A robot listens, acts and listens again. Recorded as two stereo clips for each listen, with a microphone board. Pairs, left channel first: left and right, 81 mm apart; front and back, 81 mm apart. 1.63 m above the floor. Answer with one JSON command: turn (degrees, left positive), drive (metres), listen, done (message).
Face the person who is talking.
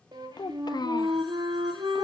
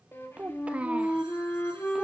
{"turn": 110}
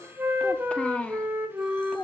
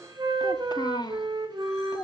{"turn": 15}
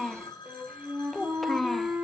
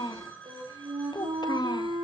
{"done": "Found it: a child speaking, straight ahead."}